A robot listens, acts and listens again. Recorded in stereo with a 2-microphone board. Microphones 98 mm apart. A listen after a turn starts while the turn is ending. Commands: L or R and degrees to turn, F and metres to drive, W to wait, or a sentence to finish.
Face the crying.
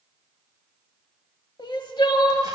L55
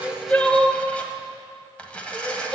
Facing the crying, under 1 m away.